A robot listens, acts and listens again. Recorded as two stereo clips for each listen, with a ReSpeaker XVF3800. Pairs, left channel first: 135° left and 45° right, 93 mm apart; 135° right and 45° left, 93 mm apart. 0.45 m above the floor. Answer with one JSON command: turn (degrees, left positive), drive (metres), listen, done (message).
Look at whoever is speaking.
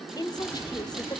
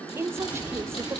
{"turn": 100}
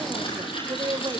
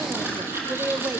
{"turn": -20}
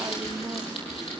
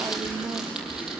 {"listen": true}
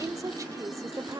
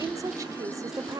{"done": "Found it: a woman speaking, straight ahead, 1 to 2 m away."}